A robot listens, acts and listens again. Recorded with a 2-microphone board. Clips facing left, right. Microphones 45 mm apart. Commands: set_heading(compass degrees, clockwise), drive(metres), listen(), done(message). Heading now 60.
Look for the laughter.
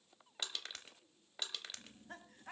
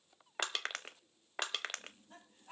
set_heading(330)
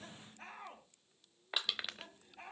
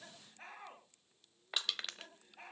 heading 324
done("Facing the laughter, over 4 m away.")